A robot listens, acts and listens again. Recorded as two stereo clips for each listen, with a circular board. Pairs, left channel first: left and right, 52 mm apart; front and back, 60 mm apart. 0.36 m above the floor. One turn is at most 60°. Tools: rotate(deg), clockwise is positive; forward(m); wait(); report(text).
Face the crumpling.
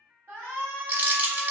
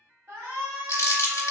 rotate(35)
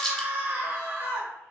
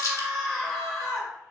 report("Found it: crumpling, straight ahead, 1 to 2 m away.")